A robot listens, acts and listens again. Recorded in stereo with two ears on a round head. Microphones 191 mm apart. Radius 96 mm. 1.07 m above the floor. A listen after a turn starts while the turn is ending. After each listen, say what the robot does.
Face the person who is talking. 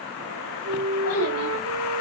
Turn 90° left.
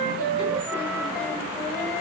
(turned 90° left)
Keep listening.
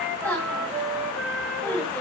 Turn 10° left.
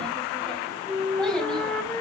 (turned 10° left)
Found it: a child speaking, straight ahead.